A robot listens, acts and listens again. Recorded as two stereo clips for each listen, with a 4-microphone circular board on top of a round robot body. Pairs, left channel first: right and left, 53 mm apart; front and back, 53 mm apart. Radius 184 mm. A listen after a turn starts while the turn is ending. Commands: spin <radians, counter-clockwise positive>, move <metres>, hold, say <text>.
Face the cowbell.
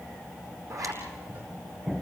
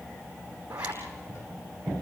hold
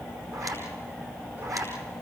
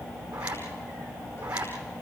hold
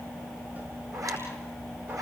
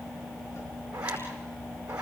say I can't make out a cowbell, only a zipper.